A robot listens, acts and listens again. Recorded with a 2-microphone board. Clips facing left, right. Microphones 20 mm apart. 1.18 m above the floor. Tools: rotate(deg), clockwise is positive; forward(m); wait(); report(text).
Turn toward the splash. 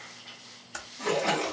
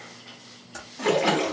rotate(75)
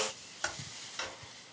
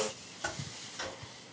wait()
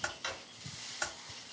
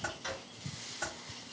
report("I heard a splash, but can't make it out now. It was about straight ahead or 30° right.")